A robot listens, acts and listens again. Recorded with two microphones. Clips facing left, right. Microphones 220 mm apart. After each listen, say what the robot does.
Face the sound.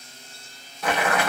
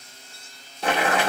Turn 30° right.
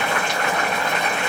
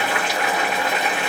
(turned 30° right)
Found it: boiling, straight ahead, 1 to 2 m away.